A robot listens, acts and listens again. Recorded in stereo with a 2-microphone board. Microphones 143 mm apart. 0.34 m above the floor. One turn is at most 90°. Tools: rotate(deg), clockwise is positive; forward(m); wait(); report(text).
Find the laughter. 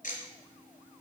wait()
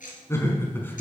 rotate(-30)
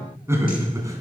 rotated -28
rotate(25)
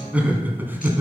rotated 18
rotate(15)
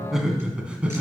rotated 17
rotate(10)
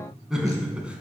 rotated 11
rotate(10)
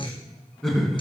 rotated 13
report("Found it: laughter, straight ahead.")